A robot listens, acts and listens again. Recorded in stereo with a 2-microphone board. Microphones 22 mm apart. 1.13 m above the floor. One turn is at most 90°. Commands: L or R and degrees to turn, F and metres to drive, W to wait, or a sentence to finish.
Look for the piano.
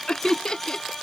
W
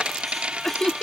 W
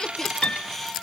L75
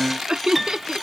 Found it: a piano, straight ahead.